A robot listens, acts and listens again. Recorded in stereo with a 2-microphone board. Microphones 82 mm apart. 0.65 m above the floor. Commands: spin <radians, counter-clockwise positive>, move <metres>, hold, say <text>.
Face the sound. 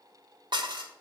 spin -1.22
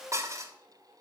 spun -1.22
spin -0.70
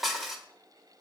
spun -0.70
say Facing the dishes clattering.